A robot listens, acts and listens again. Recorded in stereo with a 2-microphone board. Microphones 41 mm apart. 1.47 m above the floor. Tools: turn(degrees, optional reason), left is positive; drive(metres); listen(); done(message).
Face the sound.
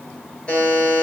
turn(degrees=20, reason="The buzzer: about 20° left or 160° left.")
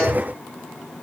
listen()
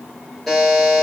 done("Found it: a buzzer, straight ahead.")